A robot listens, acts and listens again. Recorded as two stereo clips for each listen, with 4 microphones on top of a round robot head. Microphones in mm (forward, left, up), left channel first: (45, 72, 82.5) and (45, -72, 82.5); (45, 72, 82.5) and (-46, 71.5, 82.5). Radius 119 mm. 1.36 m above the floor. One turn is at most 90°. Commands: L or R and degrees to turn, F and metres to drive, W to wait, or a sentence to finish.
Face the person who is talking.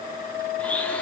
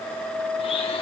W
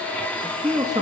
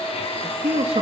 R90
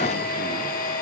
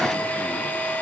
R70
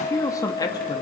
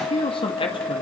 L25
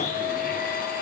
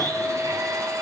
W
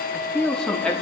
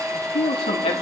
Found it: a man speaking, straight ahead, 2 to 4 m away.